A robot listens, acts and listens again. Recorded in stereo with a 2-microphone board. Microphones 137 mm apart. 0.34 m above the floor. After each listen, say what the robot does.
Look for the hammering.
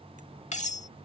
Keep listening.
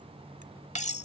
Keep listening.
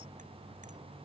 I can't make out hammering to turn to.